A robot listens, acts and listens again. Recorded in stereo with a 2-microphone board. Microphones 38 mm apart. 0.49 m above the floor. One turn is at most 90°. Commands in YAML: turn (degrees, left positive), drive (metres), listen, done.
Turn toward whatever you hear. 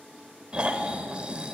turn: -25
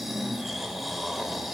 done: "Facing the snoring."